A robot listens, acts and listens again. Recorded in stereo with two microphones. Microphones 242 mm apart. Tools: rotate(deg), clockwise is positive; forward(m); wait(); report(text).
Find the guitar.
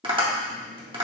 wait()
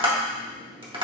wait()
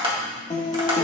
rotate(-25)
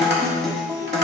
report("Facing the guitar.")